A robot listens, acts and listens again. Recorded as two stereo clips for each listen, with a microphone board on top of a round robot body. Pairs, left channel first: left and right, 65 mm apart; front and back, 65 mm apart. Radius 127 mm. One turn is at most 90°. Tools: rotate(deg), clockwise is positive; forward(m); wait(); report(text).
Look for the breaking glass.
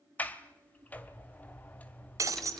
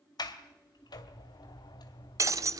rotate(90)
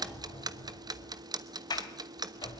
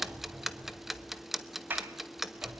rotate(50)
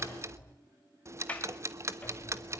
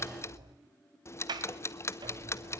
report("I heard breaking glass from this way, but can't make it out now.")